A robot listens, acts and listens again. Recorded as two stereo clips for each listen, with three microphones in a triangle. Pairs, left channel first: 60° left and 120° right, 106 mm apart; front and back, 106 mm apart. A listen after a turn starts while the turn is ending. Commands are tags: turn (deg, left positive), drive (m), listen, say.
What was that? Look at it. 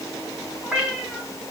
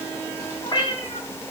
<turn deg="-40"/>
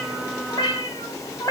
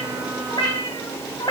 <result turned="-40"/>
<turn deg="15"/>
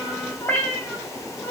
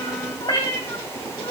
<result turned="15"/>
<turn deg="-20"/>
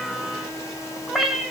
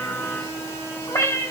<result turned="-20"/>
<turn deg="-40"/>
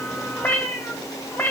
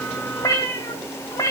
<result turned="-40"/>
<say>Found it: a cat meowing, straight ahead, 1 to 2 m away.</say>